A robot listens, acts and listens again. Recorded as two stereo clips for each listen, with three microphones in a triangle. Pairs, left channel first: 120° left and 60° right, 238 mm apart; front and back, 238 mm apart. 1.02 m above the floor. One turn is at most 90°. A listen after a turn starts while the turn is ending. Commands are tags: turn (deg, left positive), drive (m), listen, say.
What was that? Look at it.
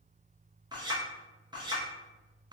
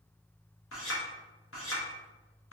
<turn deg="10"/>
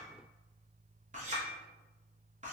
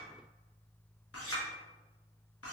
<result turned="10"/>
<say>Found it: a clink, straight ahead, under 1 m away.</say>